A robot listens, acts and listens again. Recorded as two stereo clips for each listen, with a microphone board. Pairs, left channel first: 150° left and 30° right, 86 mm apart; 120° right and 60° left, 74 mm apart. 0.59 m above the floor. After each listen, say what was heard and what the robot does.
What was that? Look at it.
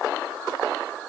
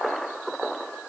Keep listening.
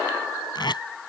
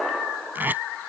The tape being pulled: 125° left. Turn 125° left.
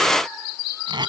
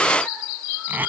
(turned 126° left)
Found it: tape being pulled, straight ahead.